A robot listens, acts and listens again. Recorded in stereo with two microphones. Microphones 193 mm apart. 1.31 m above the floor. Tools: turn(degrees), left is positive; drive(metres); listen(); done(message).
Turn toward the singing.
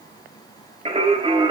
turn(degrees=-25)
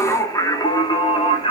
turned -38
turn(degrees=30)
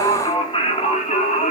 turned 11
turn(degrees=40)
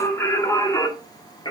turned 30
turn(degrees=25)
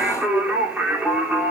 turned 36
turn(degrees=-10)
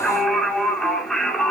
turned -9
done("Found it: singing, straight ahead, 2 to 4 m away.")